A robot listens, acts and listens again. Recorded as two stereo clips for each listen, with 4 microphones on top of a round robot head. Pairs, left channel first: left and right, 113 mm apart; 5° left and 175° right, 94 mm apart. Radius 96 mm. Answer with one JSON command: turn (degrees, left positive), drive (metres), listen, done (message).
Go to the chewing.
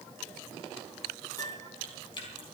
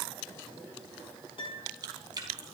{"turn": 145}
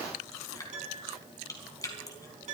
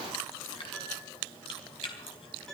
{"turn": 30}
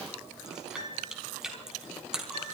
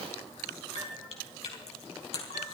{"drive": 1.0}
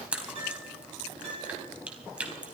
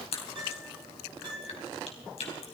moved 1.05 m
{"turn": -10}
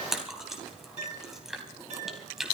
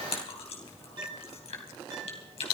{"drive": 1.0}
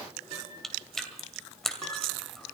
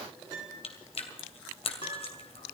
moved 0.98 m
{"drive": 1.0}
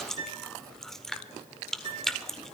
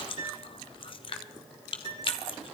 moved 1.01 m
{"drive": 1.0}
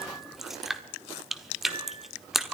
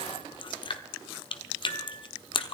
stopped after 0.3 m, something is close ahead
{"done": "I am next to the chewing."}